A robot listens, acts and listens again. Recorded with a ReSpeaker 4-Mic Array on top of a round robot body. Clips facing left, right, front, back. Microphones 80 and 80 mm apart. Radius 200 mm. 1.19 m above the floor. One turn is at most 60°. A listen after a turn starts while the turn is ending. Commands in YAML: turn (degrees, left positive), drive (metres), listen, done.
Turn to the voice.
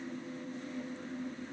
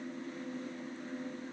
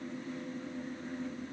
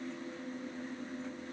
listen: true
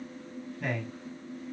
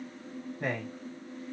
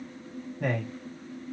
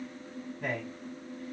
turn: -35
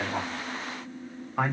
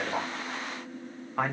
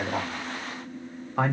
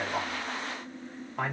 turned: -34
done: "Found it: a man speaking, straight ahead, 1 to 2 m away."